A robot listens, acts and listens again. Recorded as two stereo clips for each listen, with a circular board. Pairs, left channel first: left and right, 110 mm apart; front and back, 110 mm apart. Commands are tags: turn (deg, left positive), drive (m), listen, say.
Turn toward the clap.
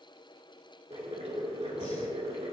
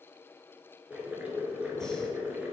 <listen/>
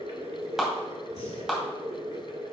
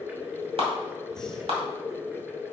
<turn deg="-175"/>
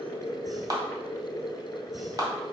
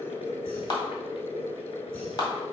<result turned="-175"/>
<turn deg="-45"/>
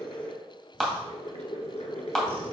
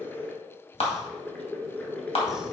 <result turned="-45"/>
<say>Facing the clap, 1 to 2 m away.</say>